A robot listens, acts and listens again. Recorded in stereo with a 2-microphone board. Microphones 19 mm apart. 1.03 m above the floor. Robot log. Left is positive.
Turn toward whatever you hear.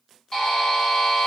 note: The buzzer: about 40° left or 140° left.
cmd yaw +40
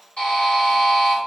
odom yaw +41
note: So it is at 100° left.
cmd yaw +100
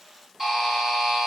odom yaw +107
end: Facing the buzzer.